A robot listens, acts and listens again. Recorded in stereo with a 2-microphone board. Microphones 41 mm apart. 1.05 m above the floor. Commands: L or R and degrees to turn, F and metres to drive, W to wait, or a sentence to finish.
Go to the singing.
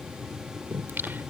R60
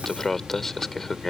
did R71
L10
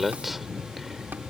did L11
F1.0
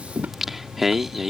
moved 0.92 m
F1.0
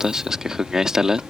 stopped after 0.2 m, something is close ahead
R15
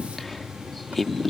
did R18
Arrived at the singing, straight ahead.